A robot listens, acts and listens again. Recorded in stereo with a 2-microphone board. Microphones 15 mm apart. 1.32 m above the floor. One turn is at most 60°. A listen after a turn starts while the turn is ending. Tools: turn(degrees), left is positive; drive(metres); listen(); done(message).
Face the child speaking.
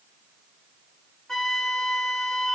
listen()
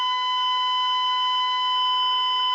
listen()
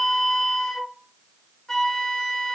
done("I can't make out a child speaking to turn to.")